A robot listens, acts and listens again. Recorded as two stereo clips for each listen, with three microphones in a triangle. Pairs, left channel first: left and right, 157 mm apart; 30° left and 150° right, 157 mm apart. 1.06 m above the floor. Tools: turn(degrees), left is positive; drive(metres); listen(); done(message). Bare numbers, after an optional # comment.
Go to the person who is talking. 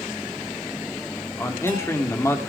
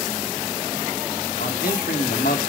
# The man speaking: 20° left.
turn(20)
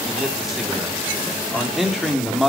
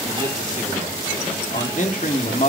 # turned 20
drive(1.0)
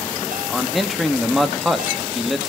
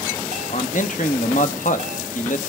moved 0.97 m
drive(1.0)
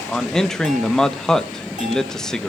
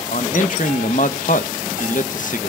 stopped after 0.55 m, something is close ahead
done("Arrived at the man speaking, straight ahead.")